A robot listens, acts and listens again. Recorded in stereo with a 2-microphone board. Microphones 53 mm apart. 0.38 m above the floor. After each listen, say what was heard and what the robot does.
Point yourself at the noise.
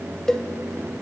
Turn 30° left.
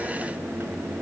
Keep listening.
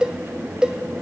So it is at 20° right. Turn 20° right.
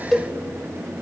Found it: a cowbell, straight ahead, 1 to 2 m away.